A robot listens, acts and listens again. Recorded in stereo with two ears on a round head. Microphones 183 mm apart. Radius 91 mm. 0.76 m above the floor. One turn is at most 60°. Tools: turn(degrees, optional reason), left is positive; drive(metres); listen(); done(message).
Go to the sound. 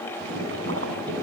turn(degrees=-60, reason="The boiling: about 70° right or 110° right.")
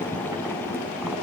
turn(degrees=-10, reason="So it is at 10° right.")
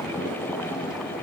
drive(metres=1.0)
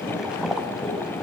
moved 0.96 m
drive(metres=1.0)
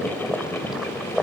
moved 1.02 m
drive(metres=1.0)
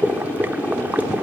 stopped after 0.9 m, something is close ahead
turn(degrees=-10, reason="The boiling is now 10° right.")
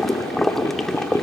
done("Arrived at the boiling, straight ahead.")